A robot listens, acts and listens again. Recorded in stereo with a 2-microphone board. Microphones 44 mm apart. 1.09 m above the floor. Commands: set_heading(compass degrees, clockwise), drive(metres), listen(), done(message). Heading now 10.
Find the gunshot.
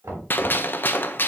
set_heading(320)
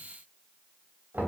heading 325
listen()
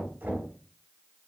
done("I heard a gunshot, but can't make it out now. It was about 5° left or 85° left.")